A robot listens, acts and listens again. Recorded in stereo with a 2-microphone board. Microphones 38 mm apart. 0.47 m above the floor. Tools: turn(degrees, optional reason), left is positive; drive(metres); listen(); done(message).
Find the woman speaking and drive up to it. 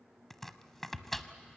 listen()
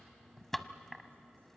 listen()
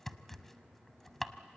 done("I can't make out a woman speaking to turn to.")